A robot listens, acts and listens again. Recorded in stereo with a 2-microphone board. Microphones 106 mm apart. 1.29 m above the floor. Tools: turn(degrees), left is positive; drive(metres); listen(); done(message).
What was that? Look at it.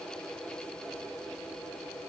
listen()
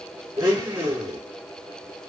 turn(degrees=-35)
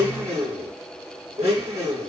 turn(degrees=-105)
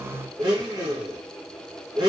turn(degrees=-40)
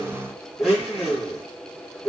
done("Facing the blender.")